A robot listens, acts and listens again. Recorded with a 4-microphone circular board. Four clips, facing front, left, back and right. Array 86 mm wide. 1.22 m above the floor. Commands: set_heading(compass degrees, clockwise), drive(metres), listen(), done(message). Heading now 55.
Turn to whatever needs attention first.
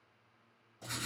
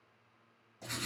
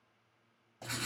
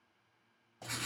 listen()
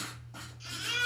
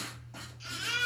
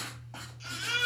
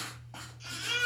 set_heading(265)
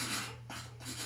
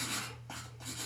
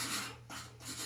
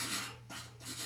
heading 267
listen()
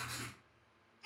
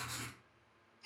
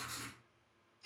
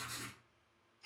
done("Facing the baby crying, 1 to 2 m away.")